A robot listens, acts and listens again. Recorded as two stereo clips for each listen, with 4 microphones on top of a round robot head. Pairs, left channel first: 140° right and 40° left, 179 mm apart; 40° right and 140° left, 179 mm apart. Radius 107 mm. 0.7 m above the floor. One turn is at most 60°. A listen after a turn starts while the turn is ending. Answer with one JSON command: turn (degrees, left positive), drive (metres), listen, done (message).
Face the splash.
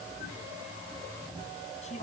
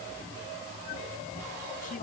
{"listen": true}
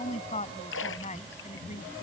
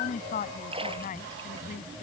{"turn": -60}
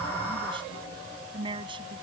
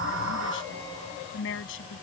{"turn": -60}
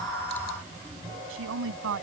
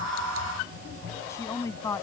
{"turn": -35}
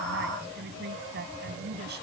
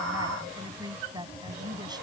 {"done": "Facing where the splash came from. I can't hear it now."}